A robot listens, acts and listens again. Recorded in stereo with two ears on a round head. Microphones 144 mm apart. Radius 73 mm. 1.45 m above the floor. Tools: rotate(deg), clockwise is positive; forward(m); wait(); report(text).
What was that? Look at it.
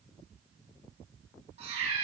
rotate(45)
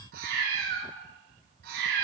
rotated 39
rotate(105)
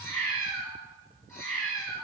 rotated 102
rotate(-15)
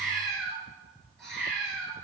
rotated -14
report("Facing the cat meowing.")